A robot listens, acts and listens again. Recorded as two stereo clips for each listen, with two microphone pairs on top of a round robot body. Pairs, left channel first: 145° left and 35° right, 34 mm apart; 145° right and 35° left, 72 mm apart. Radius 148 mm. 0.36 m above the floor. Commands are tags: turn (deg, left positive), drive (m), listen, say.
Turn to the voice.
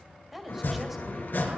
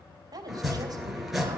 <turn deg="50"/>
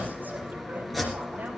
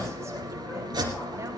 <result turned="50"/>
<listen/>
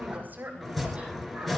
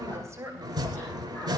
<turn deg="-10"/>
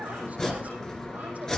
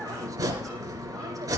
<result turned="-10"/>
<listen/>
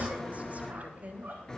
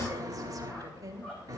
<say>Facing the woman speaking.</say>